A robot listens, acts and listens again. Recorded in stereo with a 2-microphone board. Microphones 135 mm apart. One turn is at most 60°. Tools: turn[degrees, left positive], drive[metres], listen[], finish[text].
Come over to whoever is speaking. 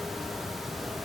Action: listen[]
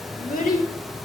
Action: turn[60]
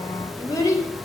Thought: So it is at 25° left.
Action: turn[25]
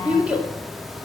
Thought: The child speaking is now 10° right.
Action: turn[-10]
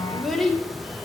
Action: drive[1.0]
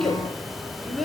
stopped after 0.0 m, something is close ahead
Action: finish[Blocked. The child speaking is further on, straight ahead.]